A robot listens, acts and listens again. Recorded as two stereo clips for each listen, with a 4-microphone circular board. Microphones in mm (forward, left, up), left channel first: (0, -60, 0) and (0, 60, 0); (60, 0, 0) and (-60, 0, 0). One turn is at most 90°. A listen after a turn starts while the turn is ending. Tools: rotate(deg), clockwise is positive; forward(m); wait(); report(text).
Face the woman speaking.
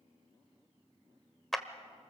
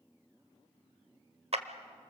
wait()
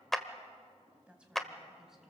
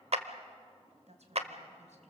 rotate(-90)
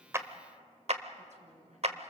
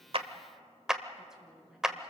rotate(-90)
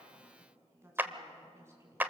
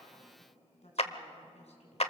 rotate(-25)
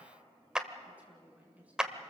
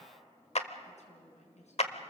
rotate(-10)
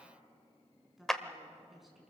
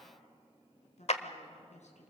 report("Facing the woman speaking, over 4 m away.")